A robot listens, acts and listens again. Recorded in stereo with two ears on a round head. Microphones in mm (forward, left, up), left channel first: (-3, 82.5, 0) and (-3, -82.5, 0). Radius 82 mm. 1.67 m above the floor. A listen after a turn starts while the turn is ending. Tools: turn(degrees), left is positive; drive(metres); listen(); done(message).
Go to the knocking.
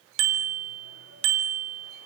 listen()
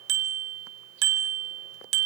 listen()
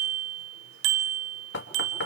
turn(degrees=65)
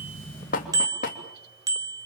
turn(degrees=45)
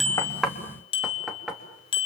drive(metres=1.0)
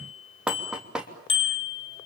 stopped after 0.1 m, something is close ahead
done("Something is in my way. I am facing the knocking but have not reached it.")